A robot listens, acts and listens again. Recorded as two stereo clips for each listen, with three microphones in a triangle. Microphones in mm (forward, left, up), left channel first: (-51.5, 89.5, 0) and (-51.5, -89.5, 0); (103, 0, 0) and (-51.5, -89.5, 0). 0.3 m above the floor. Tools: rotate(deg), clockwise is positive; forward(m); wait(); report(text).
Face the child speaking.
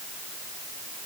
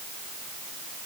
wait()
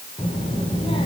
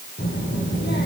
rotate(-30)
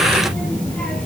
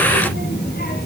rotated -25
report("Found it: a child speaking, straight ahead, over 4 m away.")